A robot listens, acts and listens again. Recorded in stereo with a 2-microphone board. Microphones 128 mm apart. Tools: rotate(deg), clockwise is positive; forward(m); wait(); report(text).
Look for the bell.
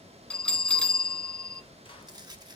rotate(-30)
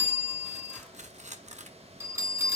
rotate(25)
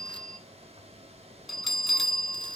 report("Found it: a bell, straight ahead, 1 to 2 m away.")